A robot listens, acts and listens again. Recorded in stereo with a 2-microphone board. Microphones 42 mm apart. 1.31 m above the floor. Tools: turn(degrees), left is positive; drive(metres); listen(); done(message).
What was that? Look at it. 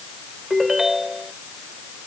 turn(degrees=-30)
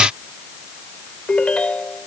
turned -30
turn(degrees=25)
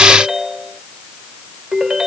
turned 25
turn(degrees=-15)
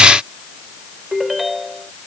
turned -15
done("Facing the ringtone.")